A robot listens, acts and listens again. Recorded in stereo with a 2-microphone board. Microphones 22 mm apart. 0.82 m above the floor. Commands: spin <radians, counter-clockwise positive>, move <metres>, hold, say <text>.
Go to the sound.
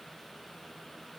hold
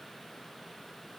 hold
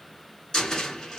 spin 0.70
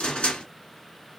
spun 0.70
spin 1.75
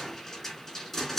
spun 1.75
spin 0.26
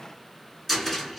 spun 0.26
move 1.0
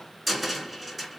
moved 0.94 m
move 1.0
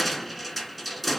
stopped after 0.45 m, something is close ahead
say Arrived at the cupboard door, straight ahead.